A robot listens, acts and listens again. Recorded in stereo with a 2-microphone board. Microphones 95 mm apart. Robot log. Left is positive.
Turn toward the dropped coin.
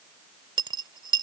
note: The dropped coin: about 55° right or 125° right.
cmd yaw -55
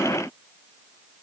cmd idle
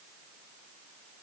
end: I heard a dropped coin, but can't make it out now. It was about straight ahead or 70° right.